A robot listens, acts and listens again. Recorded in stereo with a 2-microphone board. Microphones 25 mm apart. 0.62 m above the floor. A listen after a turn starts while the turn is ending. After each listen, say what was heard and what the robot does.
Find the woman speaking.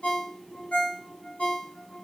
Keep listening.
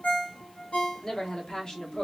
The woman speaking: about 40° left or 140° left. Turn 40° left.
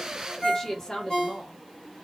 The woman speaking: about 30° left or 150° left. Turn 30° left.
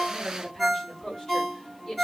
So it is at 25° left. Turn 25° left.
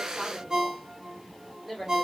Found it: a woman speaking, straight ahead, 1 to 2 m away.